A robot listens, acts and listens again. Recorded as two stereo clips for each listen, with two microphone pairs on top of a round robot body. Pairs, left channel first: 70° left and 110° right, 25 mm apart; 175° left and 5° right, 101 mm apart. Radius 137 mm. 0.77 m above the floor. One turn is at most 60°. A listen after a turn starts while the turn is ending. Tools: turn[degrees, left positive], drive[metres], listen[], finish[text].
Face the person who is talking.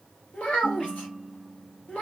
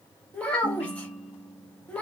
Thought: The child speaking: 95° left.
Action: turn[60]
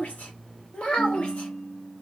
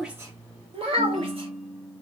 Thought: The child speaking is now 25° left.
Action: turn[25]
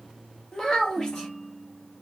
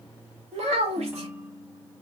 Action: finish[Facing the child speaking.]